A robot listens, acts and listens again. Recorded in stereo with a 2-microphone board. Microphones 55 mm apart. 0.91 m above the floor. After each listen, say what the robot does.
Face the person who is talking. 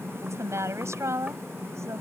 Turn 65° right.
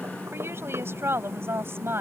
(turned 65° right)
Turn 50° right.
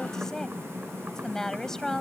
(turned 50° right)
Turn 10° left.
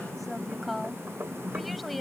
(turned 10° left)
Found it: a woman speaking, straight ahead.